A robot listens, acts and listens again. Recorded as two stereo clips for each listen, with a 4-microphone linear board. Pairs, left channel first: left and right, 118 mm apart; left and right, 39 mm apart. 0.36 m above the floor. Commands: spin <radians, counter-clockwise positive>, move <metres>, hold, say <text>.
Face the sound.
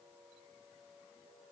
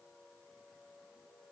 hold
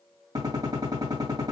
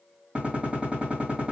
spin -0.61
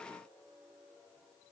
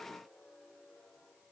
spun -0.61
hold
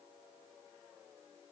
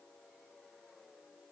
say I heard a gunshot, but can't make it out now. It was about straight ahead or 110° right.